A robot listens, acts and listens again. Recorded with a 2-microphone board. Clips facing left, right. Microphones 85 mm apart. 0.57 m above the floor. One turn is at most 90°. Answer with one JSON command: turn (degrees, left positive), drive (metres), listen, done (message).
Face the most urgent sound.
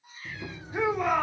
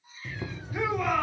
{"turn": 25}
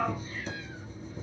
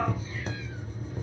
{"listen": true}
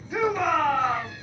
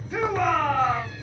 {"done": "Found it: a shout, straight ahead, 1 to 2 m away."}